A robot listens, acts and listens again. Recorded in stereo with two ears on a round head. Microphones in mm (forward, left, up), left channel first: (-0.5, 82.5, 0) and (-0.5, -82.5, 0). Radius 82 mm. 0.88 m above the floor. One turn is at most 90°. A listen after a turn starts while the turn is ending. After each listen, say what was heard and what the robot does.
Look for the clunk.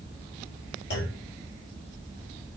The clunk: about 65° left or 115° left. Turn 65° left.
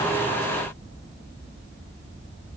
Keep listening.
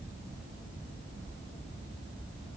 I heard a clunk, but can't make it out now. It was about straight ahead or 50° left.